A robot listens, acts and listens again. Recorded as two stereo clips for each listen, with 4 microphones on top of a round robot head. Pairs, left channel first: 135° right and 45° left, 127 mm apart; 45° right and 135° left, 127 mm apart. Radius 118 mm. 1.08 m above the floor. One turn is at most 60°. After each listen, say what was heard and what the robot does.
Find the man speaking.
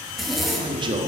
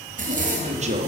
The man speaking: 105° left. Turn 60° left.
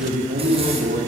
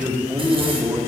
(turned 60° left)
The man speaking is now 60° left. Turn 60° left.
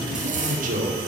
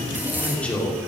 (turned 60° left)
The man speaking is now 35° left. Turn 35° left.
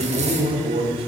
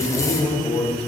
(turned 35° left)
Found it: a man speaking, straight ahead.